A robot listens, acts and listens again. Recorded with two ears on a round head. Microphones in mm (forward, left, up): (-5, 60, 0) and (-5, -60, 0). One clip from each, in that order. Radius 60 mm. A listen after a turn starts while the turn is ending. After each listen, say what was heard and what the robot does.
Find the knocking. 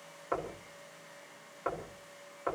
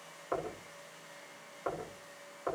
The knocking: about 75° left or 105° left. Turn 75° left.
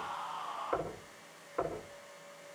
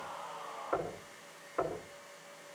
Facing the knocking, over 4 m away.